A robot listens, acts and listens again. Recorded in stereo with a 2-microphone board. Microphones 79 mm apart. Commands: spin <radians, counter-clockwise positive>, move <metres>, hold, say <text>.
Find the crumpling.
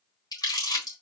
spin 0.96
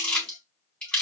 spin 0.26
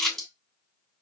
say Found it: crumpling, straight ahead, 2 to 4 m away.